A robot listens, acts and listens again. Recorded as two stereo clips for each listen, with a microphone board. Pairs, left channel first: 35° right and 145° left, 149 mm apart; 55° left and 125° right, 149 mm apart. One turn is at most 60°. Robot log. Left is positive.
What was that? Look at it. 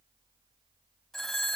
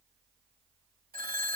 note: The phone ringing: 120° right.
cmd yaw -60
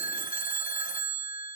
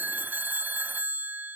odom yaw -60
note: The phone ringing is now 45° right.
cmd yaw -45
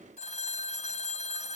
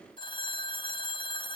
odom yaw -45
end: Found it: a phone ringing, straight ahead.